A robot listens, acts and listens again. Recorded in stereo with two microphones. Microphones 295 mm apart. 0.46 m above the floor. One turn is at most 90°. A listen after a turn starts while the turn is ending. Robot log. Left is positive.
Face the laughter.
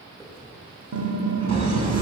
note: The laughter: about 65° right or 115° right.
cmd yaw -65
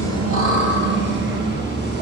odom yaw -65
note: So it is at 35° right.
cmd yaw -35
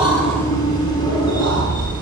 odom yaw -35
note: The laughter is now 15° left.
cmd yaw +15
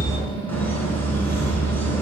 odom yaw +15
end: Facing the laughter, over 4 m away.